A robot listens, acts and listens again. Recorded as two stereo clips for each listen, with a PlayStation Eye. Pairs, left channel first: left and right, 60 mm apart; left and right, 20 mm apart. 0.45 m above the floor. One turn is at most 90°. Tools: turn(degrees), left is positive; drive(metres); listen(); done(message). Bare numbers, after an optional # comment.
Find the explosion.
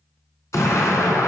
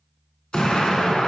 # The explosion: about 60° left or 120° left.
turn(60)
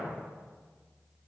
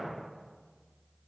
listen()
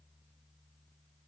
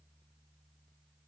done("I heard an explosion, but can't make it out now. It was about straight ahead or 60° left.")